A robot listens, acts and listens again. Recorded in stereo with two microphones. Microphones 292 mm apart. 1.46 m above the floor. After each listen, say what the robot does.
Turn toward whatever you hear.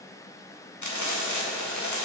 Turn 90° left.
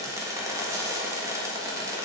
Turn 10° right.
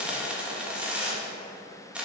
Facing the frying.